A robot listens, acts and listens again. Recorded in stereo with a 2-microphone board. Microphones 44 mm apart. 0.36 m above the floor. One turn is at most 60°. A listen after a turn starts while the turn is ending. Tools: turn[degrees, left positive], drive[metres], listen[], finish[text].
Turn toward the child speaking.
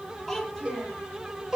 Action: turn[30]
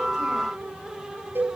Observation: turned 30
Action: listen[]
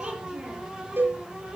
Thought: So it is at 25° right.
Action: turn[-25]
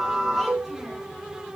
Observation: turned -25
Action: listen[]
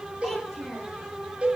Action: finish[Found it: a child speaking, straight ahead, over 4 m away.]